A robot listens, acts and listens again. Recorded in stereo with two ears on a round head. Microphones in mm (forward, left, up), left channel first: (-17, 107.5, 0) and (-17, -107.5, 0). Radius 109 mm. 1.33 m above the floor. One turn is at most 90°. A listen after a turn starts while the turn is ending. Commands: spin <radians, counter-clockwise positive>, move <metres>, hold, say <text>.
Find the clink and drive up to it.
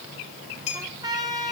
spin 0.44
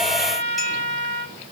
hold
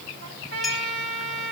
hold
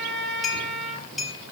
move 1.0
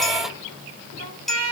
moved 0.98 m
move 1.0
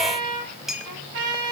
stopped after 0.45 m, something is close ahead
say Arrived at the clink, straight ahead.